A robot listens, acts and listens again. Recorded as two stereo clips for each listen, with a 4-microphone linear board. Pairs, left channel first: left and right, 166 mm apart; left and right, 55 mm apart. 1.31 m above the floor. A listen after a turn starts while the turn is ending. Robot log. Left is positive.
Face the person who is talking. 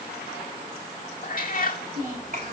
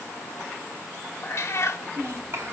note: The child speaking: about 55° right or 125° right.
cmd yaw -55
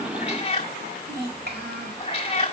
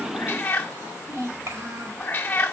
note: So it is at 75° right.
cmd yaw -75
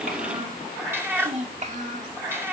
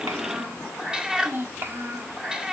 note: The child speaking is now 50° right.
cmd yaw -50
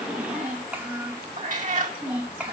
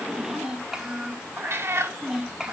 note: The child speaking is now 10° right.
cmd yaw -10
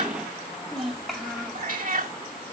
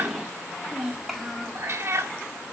end: Facing the child speaking.